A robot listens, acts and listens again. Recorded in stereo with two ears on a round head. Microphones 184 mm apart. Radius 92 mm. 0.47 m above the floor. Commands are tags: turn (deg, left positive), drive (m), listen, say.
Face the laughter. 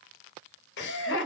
<turn deg="60"/>
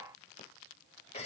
<turn deg="30"/>
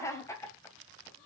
<turn deg="15"/>
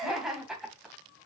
<say>Found it: laughter, straight ahead.</say>